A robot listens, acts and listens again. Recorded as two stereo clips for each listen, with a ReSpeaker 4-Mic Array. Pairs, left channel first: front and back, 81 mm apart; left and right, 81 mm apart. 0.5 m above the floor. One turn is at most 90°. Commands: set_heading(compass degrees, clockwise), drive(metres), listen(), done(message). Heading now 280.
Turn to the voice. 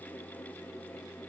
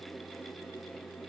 listen()
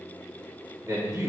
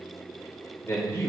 set_heading(190)
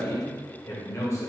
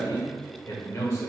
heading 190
set_heading(145)
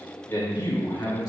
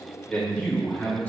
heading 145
set_heading(125)
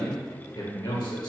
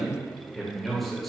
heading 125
done("Facing the man speaking.")